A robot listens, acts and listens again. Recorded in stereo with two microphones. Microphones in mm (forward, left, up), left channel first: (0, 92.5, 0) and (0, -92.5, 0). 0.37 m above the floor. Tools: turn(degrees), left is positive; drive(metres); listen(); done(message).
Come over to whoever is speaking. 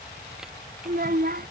turn(degrees=-55)
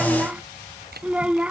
drive(metres=1.0)
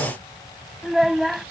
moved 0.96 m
drive(metres=1.0)
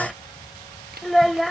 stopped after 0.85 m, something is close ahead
done("I am next to the child speaking.")